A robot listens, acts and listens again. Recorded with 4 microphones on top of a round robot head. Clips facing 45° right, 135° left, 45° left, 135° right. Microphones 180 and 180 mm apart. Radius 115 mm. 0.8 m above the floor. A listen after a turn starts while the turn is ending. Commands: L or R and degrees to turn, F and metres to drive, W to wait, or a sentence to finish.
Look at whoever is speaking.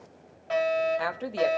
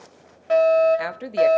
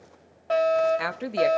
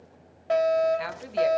L65
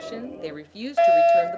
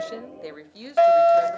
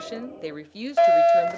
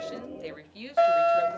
L15
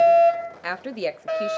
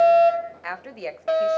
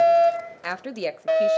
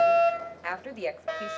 Facing the woman speaking, under 1 m away.